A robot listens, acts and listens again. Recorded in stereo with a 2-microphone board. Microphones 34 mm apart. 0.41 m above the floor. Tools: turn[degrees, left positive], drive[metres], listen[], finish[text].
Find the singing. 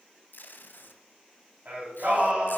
Thought: The singing: about 50° right or 130° right.
Action: turn[-50]
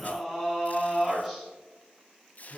Action: finish[Facing the singing, 2 to 4 m away.]